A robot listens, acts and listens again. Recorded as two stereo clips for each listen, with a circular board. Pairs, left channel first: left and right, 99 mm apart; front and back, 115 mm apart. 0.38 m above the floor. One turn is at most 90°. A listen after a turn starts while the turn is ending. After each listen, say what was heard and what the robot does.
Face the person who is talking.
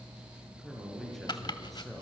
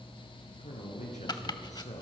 Facing the man speaking, over 4 m away.